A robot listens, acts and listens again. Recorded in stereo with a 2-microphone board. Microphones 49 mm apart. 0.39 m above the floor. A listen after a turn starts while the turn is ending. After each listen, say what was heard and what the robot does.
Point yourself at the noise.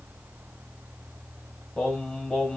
Turn 30° left.
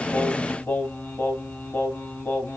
So it is at 135° left. Turn 135° left.
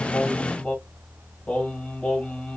The singing is now 25° left. Turn 25° left.
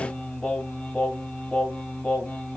The singing is now 25° left. Turn 25° left.
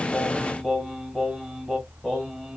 Facing the singing, 1 to 2 m away.